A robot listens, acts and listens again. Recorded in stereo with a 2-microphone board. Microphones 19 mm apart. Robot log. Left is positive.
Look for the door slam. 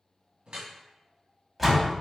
cmd yaw -30
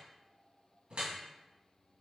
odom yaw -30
cmd idle
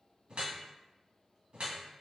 end: I heard a door slam, but can't make it out now. It was about 25° left or 145° right.